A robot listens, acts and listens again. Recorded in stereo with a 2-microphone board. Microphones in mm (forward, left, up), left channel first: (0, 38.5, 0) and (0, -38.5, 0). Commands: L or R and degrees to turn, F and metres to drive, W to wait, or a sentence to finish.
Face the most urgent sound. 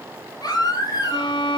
L55
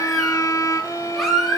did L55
Facing the baby crying, 2 to 4 m away.